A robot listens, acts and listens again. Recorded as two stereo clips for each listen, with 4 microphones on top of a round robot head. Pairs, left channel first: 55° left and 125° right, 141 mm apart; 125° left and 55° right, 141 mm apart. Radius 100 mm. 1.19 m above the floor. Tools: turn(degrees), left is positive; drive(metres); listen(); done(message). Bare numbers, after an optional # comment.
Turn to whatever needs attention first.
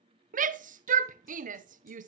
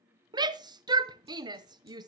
# The shout: 115° right.
turn(-115)
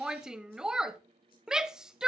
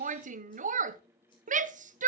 # The shout is now 40° right.
turn(-40)
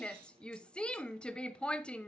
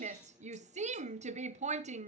# The shout is now 25° right.
turn(-25)
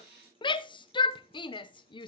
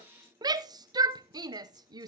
done("Found it: a shout, straight ahead.")